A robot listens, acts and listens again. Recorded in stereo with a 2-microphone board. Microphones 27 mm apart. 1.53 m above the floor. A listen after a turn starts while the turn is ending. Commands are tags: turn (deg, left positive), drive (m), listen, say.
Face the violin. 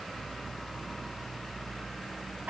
<listen/>
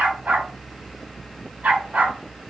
<listen/>
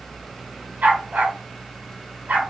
<say>I can't make out a violin to turn to.</say>